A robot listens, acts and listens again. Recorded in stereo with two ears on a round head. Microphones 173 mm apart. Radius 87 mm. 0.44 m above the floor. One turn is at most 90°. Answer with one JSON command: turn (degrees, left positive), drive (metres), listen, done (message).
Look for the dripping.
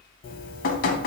{"turn": 45}
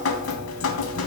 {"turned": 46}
{"turn": 85}
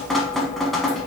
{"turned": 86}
{"done": "Found it: dripping, straight ahead."}